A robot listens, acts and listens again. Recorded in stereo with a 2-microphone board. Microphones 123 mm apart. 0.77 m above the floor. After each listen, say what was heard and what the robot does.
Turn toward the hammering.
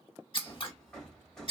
Turn 30° left.
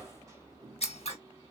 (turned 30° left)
So it is at 25° right. Turn 25° right.
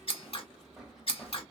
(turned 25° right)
Found it: hammering, straight ahead, 1 to 2 m away.